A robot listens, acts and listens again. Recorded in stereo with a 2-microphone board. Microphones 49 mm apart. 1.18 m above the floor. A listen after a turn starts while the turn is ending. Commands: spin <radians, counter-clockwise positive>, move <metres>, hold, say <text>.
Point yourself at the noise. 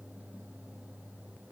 hold
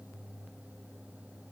hold
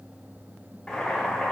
spin 0.52
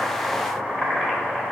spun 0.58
spin -0.35
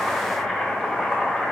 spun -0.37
say Facing the boiling, 1 to 2 m away.